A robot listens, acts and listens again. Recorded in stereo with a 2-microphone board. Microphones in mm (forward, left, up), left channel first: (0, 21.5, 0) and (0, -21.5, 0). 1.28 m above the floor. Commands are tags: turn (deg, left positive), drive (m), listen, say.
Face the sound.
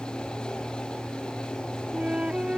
<turn deg="-25"/>
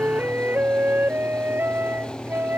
<turn deg="-130"/>
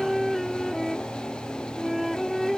<say>Found it: a flute, straight ahead.</say>